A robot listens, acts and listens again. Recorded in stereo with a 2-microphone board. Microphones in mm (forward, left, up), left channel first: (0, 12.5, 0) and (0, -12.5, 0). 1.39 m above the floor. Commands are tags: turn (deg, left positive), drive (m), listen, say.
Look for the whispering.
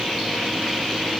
<listen/>
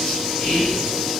<turn deg="75"/>
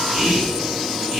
<say>Facing the whispering.</say>